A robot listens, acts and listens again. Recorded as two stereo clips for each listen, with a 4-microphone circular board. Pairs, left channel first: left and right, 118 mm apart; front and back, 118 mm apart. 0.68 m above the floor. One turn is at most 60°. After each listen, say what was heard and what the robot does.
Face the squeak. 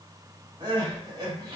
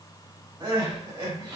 Keep listening.
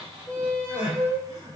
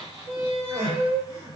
The squeak: 135° left. Turn 60° left.
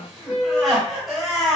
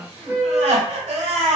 The squeak is now 90° left. Turn 60° left.
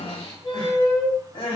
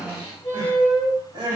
The squeak is now 45° left. Turn 45° left.
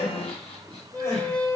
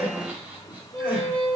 The squeak is now 15° left. Turn 15° left.
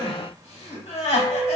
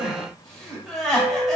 Facing the squeak.